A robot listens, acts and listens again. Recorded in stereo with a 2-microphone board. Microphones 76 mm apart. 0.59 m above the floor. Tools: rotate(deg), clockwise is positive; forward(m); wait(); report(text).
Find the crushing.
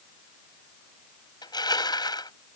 rotate(-70)
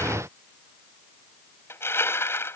rotate(-35)
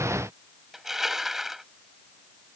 report("Facing the crushing.")